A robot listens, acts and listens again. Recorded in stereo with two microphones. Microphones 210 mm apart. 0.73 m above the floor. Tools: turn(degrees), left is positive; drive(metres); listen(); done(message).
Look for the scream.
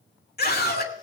turn(degrees=50)
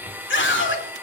turn(degrees=75)
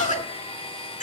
turn(degrees=40)
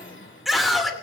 done("Facing the scream, 2 to 4 m away.")